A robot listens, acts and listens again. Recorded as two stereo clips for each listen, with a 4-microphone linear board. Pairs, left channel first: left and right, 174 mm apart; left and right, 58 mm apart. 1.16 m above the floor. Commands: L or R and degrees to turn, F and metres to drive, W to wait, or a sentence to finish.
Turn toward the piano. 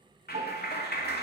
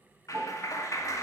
R40
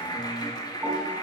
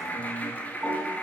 W
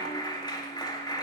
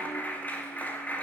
W
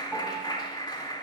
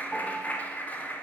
I heard a piano, but can't make it out now. It was about straight ahead or 100° right.